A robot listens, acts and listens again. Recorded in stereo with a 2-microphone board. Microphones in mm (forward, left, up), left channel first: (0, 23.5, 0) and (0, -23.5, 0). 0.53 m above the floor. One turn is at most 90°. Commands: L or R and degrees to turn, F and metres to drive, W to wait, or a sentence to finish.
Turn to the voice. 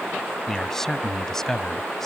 L30
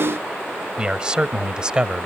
R20
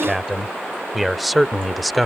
Facing the man speaking.